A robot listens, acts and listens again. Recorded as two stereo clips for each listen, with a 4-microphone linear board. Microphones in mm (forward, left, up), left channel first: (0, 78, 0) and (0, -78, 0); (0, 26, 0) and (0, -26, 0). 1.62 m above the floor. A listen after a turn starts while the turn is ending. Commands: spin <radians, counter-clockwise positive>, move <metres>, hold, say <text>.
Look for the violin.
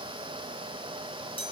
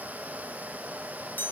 hold
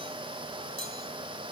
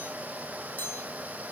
hold
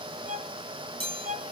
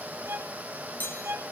spin -1.05
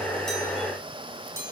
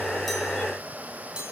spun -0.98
hold
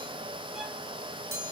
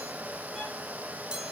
hold
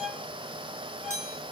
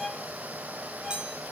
say Facing the violin, 2 to 4 m away.